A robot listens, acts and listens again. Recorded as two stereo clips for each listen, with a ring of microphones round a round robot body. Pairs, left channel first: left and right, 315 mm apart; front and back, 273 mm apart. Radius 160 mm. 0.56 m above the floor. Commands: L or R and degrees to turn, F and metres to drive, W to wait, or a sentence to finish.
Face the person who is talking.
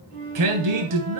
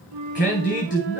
R65
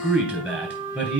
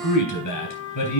Found it: a man speaking, straight ahead, 2 to 4 m away.